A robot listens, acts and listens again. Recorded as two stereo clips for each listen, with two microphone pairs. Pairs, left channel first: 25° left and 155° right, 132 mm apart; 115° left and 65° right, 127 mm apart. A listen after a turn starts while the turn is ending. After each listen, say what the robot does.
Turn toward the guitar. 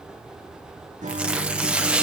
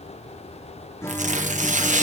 Turn 175° right.
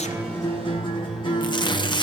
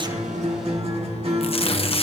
Turn 25° right.
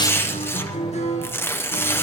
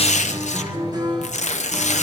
Turn 10° right.
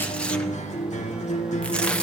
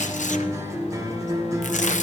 Facing the guitar, 2 to 4 m away.